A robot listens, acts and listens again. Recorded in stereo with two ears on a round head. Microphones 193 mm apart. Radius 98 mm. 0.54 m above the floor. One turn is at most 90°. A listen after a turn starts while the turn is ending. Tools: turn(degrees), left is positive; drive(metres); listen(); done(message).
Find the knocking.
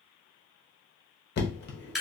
turn(degrees=50)
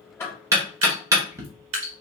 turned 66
turn(degrees=-15)
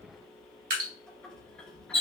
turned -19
done("Facing the knocking.")